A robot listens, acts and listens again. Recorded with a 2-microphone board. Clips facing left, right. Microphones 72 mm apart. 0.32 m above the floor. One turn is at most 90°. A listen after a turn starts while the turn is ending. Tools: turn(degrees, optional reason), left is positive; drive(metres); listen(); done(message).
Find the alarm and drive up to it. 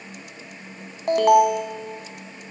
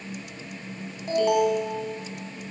turn(degrees=65, reason="The alarm: about 65° left or 115° left.")
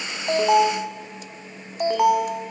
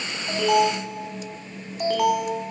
turn(degrees=25, reason="So it is at 25° left.")
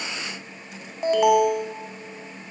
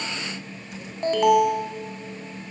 drive(metres=1.0)
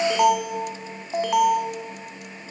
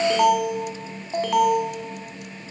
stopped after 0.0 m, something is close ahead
done("Something is in my way. I am facing the alarm but have not reached it.")